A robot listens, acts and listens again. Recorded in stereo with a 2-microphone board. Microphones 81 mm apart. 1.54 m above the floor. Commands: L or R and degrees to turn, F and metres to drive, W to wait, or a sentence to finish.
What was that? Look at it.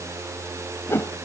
L30
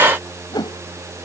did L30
L120
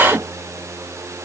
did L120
R40
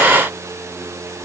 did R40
R10
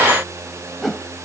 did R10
Facing the whoosh.